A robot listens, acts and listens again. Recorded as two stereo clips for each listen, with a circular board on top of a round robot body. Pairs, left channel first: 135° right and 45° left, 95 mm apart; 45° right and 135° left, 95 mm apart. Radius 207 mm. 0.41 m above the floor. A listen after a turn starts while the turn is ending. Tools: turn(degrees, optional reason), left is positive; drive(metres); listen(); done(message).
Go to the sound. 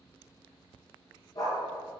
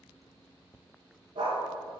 turn(degrees=175, reason="The dog barking: 175° left.")
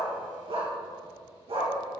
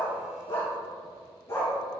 turn(degrees=20, reason="The dog barking is now 20° left.")
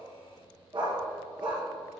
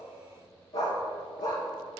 drive(metres=1.0)
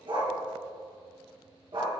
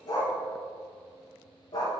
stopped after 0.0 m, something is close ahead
turn(degrees=10, reason="The dog barking is now 10° left.")
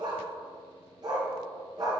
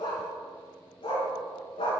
done("Something is in my way. I am facing the dog barking but have not reached it.")